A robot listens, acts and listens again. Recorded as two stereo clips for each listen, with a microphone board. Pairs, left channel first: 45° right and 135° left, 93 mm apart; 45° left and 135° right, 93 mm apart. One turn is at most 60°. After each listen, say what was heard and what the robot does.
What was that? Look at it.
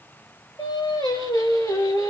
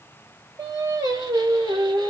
The singing: 100° right. Turn 60° right.
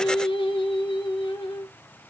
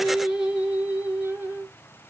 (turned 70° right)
The singing is now 70° right. Turn 60° right.
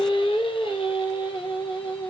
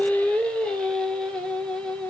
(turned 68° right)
The singing is now 40° right. Turn 40° right.
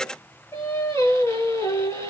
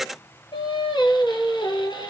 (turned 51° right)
The singing is now 10° left. Turn 10° left.
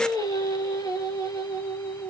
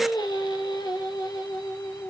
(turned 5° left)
Facing the singing, 1 to 2 m away.